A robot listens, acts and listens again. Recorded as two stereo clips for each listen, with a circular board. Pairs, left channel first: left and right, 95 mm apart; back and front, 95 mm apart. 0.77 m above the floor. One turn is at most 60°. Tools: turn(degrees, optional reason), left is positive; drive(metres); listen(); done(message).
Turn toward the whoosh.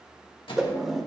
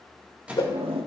turn(degrees=-60, reason="The whoosh: 175° right.")
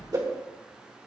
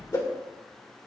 turn(degrees=-60, reason="The whoosh is now 135° right.")
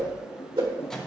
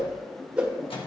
turn(degrees=-60, reason="The whoosh is now 80° right.")
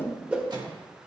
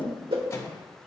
turn(degrees=-20, reason="The whoosh is now 20° right.")
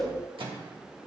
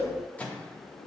done("Facing the whoosh.")